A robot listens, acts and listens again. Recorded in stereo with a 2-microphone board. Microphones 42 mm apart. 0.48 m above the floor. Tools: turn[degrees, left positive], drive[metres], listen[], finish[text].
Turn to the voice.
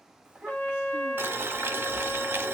Action: turn[-30]
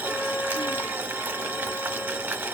Action: listen[]
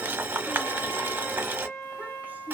Action: listen[]
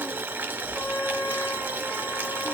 Action: finish[I heard a child speaking, but can't make it out now. It was about 15° left or 135° right.]